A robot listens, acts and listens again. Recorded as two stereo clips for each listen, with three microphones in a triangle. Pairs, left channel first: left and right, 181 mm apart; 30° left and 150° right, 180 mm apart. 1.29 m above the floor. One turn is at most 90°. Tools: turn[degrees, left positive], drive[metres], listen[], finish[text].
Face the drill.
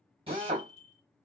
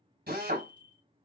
Thought: The drill: 145° right.
Action: turn[-90]
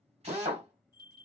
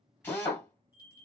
Thought: The drill is now 45° right.
Action: turn[-45]
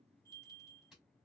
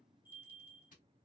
Action: listen[]
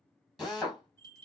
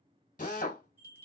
Action: finish[Facing the drill, 1 to 2 m away.]